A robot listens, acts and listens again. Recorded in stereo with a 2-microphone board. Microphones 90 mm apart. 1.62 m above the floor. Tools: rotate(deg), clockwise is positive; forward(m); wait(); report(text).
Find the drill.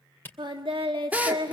rotate(15)
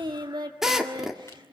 report("Facing the drill.")